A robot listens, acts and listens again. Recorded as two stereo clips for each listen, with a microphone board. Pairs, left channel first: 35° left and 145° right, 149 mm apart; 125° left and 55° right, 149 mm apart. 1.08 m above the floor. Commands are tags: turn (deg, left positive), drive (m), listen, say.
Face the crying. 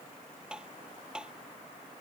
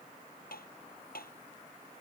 <listen/>
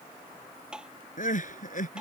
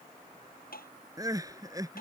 <turn deg="10"/>
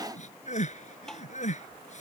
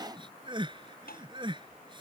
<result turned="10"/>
<say>Facing the crying.</say>